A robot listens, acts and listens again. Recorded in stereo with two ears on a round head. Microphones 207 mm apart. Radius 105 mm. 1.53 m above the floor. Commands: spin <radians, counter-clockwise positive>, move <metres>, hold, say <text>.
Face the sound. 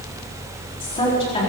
spin 0.44
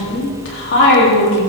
spin 2.18
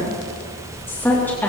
spin 0.17
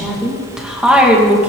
say Facing the woman speaking.